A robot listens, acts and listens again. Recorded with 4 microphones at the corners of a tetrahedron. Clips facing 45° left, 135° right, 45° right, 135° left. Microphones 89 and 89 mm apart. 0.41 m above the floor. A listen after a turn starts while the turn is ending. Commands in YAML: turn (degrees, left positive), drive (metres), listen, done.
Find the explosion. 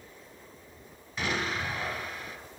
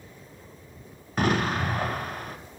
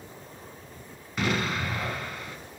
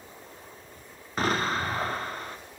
turn: -175
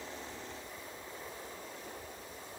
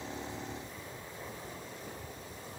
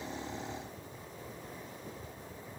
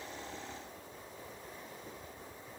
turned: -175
done: "I heard an explosion from this way, but can't make it out now."